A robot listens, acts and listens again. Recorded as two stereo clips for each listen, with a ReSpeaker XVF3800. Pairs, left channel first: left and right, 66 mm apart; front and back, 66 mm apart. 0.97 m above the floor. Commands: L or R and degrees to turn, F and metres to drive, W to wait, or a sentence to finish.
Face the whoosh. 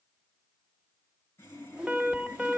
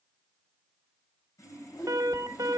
R15
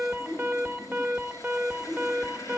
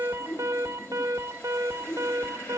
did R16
Found it: a whoosh, straight ahead, 1 to 2 m away.